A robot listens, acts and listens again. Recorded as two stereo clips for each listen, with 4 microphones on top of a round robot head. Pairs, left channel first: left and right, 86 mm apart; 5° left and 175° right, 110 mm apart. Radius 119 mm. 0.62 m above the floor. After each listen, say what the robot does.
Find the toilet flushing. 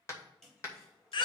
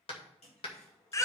Found it: a toilet flushing, straight ahead.